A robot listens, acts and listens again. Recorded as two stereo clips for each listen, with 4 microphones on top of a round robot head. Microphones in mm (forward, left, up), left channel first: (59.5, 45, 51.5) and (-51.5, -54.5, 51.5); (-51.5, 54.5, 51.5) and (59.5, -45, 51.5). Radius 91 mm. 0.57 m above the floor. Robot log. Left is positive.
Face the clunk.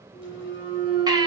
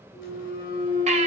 note: The clunk: 165° right.
cmd yaw -165
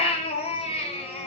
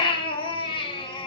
end: Facing where the clunk came from. I can't hear it now.